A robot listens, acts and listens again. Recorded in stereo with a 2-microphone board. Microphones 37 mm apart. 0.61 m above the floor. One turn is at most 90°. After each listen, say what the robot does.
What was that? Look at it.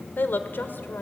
Turn 70° left.
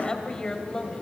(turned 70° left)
Turn 20° left.
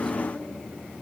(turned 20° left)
Keep listening.
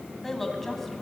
Facing the woman speaking, over 4 m away.